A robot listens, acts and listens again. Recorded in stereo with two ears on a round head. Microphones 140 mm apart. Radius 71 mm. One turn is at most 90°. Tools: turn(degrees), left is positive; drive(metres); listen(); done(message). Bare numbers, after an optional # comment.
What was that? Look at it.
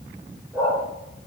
turn(30)
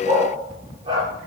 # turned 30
# So it is at 30° right.
turn(-30)
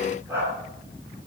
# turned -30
# The dog barking is now 15° right.
turn(-15)
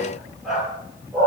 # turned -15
done("Facing the dog barking, over 4 m away.")